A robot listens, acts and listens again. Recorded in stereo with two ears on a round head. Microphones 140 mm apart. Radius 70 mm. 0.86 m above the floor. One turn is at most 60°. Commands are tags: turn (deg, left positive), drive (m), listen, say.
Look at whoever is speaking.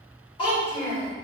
<turn deg="35"/>
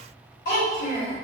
<turn deg="60"/>
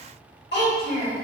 <turn deg="60"/>
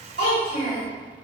<turn deg="30"/>
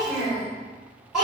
<say>Found it: a child speaking, straight ahead, 1 to 2 m away.</say>